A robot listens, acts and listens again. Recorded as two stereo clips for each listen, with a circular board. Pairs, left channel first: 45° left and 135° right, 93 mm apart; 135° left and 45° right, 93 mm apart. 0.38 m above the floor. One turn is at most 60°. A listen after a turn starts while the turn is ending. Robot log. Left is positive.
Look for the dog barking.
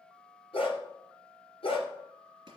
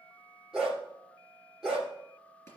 note: The dog barking: 40° left.
cmd yaw +40
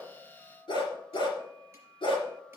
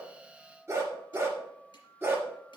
note: The dog barking is now 20° left.
cmd yaw +20
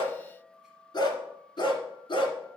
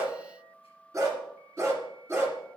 note: The dog barking is now 15° left.
cmd yaw +15
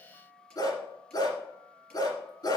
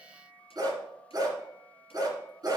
end: Facing the dog barking, 2 to 4 m away.